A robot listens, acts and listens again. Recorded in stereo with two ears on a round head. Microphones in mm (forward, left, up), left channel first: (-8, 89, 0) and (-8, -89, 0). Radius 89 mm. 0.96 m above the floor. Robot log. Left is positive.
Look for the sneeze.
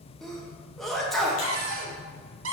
cmd yaw +30
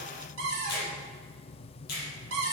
cmd idle
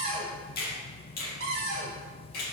end: I heard a sneeze, but can't make it out now. It was about 30° right or 150° left.